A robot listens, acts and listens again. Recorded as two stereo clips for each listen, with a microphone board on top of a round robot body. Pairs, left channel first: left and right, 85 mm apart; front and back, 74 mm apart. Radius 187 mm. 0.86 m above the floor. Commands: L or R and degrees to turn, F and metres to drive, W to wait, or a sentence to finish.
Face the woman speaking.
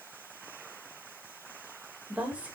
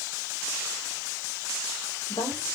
R15
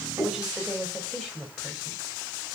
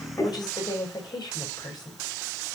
Found it: a woman speaking, straight ahead, over 4 m away.